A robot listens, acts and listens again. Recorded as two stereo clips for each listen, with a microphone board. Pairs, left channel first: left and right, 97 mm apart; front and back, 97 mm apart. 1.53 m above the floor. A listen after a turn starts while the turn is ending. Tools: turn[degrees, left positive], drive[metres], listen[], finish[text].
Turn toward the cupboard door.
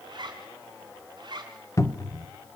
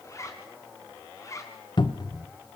Thought: The cupboard door: 35° left.
Action: turn[35]
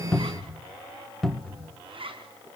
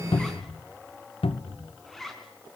Action: finish[Facing the cupboard door, 1 to 2 m away.]